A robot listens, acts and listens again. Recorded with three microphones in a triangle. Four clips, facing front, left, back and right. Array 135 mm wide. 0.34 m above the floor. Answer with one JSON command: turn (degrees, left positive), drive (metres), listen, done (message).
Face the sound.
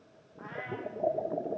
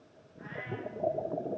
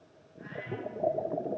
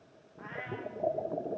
{"turn": -35}
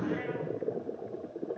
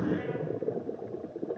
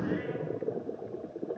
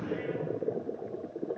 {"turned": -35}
{"listen": true}
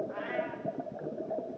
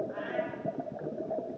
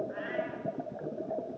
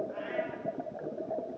{"listen": true}
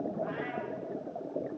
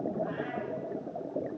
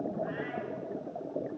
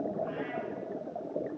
{"done": "Facing where the cat meowing came from. I can't hear it now."}